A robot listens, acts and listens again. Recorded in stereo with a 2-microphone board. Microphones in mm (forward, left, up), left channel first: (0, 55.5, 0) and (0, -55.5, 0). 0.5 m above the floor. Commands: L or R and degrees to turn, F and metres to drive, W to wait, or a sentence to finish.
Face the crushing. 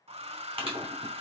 R55
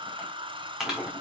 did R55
Found it: crushing, straight ahead, 2 to 4 m away.